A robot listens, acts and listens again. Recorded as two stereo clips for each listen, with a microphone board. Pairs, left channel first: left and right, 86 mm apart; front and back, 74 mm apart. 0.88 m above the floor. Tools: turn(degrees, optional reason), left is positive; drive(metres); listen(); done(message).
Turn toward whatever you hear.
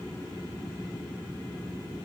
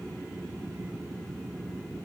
listen()
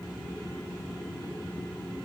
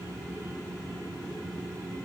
listen()
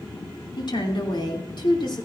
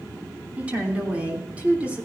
turn(degrees=110, reason="The woman speaking: 110° left.")
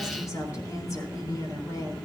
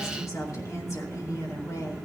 turn(degrees=40, reason="The woman speaking is now 40° left.")
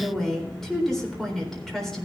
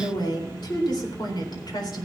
done("Facing the woman speaking.")